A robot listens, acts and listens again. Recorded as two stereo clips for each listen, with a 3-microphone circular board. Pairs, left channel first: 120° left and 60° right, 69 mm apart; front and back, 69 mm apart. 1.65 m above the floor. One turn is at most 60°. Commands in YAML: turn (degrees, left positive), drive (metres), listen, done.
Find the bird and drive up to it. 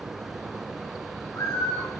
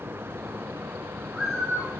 turn: 60
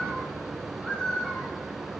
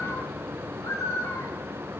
turn: 45
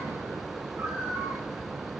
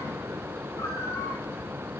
listen: true
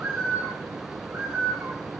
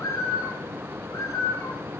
drive: 1.0
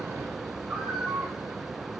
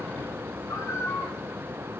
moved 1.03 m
turn: 15
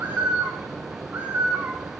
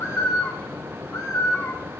drive: 1.0
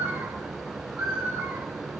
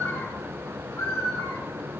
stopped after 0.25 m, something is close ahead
done: "I am next to the bird."